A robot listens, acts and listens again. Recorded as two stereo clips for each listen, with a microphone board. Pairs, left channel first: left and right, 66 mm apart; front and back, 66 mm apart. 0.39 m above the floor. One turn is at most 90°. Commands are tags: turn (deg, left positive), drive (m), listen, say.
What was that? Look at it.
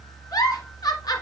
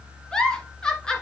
<turn deg="75"/>
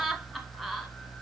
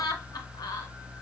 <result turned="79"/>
<say>Facing the giggle, 1 to 2 m away.</say>